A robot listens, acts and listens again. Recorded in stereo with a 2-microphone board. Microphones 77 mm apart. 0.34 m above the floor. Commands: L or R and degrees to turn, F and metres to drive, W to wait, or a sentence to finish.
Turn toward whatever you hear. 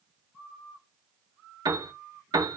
R60
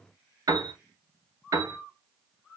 R55
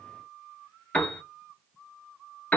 L15
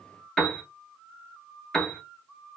Facing the piano, under 1 m away.